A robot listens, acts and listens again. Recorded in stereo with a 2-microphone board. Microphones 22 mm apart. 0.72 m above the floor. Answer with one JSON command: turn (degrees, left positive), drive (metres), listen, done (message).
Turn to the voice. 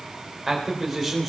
{"turn": 30}
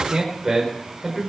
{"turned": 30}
{"turn": -10}
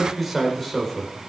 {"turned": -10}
{"turn": 10}
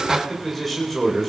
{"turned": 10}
{"turn": 15}
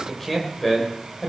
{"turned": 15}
{"turn": 15}
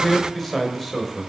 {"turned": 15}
{"done": "Found it: a man speaking, straight ahead."}